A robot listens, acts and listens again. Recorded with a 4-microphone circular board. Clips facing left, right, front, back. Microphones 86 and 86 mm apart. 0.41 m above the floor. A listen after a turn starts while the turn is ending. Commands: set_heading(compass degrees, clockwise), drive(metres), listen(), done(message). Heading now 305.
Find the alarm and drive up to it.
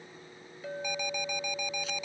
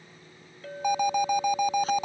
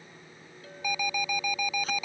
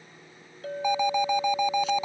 set_heading(70)
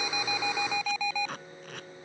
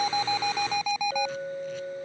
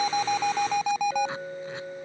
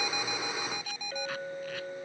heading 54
set_heading(69)
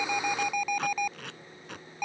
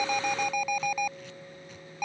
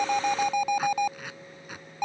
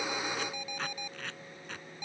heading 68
drive(1.0)
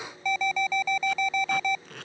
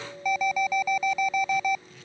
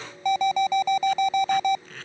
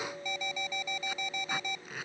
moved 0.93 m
set_heading(78)
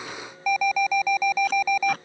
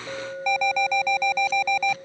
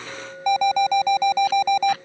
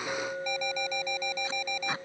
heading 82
drive(1.0)
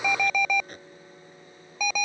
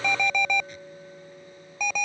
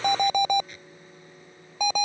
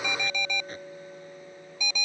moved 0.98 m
drive(1.0)
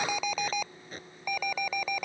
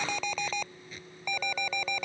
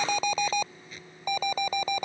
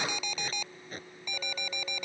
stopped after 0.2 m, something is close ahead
set_heading(72)
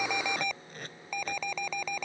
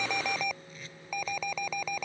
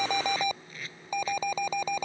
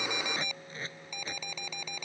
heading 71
done("Arrived at the alarm, straight ahead.")